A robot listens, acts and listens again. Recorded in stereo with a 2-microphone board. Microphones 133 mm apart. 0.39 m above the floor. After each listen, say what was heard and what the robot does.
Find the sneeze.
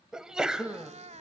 Turn 30° right.
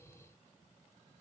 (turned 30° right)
Keep listening.
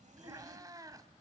I heard a sneeze, but can't make it out now. It was about 25° left or 145° right.